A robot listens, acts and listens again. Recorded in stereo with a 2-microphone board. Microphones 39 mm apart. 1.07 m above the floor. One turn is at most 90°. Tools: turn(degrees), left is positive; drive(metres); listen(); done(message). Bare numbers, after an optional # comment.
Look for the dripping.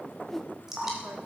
turn(-30)
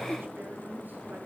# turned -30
listen()
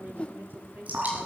# So it is at 140° right.
turn(-90)
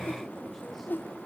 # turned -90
# Nothing new. It was at 50° right.
turn(-50)
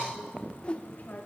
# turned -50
listen()
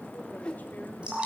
# The dripping is now 30° right.
turn(-30)
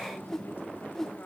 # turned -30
listen()
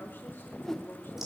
listen()
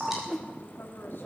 # The dripping is now 10° right.
turn(-10)
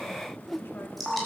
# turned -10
done("Found it: dripping, straight ahead.")